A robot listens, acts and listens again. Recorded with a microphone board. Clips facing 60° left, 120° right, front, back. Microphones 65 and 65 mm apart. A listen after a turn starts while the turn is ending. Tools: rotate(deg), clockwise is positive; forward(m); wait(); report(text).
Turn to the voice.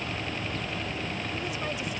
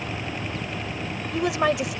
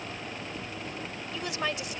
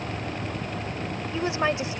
rotate(115)
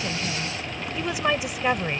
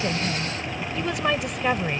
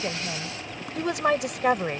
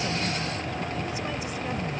rotate(25)
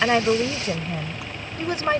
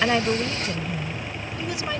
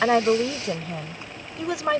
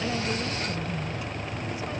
report("Facing the woman speaking.")